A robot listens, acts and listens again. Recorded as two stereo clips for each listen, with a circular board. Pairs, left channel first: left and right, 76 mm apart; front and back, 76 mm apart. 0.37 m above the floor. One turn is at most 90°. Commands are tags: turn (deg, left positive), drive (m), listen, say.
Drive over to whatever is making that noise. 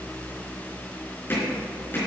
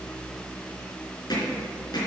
<turn deg="30"/>
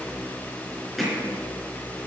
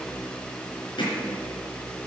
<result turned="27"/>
<drive m="1.0"/>
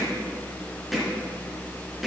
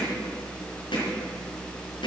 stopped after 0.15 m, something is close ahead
<say>Blocked. The hammering is further on, straight ahead.</say>